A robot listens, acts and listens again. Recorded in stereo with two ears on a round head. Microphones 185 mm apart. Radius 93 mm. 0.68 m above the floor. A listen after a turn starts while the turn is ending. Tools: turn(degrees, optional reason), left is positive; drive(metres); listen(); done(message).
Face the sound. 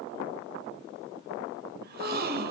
turn(degrees=-50, reason="The gasp: about 50° right or 130° right.")
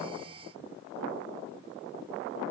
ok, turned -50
listen()
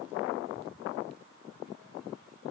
done("I heard a gasp, but can't make it out now. It was about straight ahead or 80° right.")